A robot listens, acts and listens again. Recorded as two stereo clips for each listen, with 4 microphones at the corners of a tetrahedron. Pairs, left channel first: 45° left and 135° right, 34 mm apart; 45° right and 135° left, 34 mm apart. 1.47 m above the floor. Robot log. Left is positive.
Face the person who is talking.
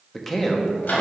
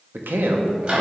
note: The man speaking: 130° left.
cmd yaw +130
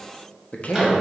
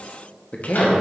end: Found it: a man speaking, straight ahead.